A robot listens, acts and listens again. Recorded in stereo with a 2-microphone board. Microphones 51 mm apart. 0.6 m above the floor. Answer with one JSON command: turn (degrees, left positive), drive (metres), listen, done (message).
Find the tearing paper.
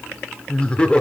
{"listen": true}
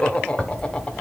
{"turn": 30}
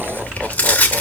{"turn": 150}
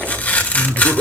{"turn": 35}
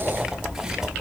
{"turn": -10}
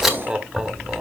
{"done": "Found it: tearing paper, straight ahead, 1 to 2 m away."}